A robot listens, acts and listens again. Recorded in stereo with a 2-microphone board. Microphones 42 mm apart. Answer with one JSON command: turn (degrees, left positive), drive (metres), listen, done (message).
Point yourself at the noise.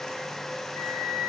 {"turn": 70}
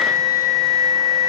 {"turn": 40}
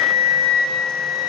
{"turn": 10}
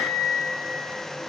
{"done": "Facing the flute, over 4 m away."}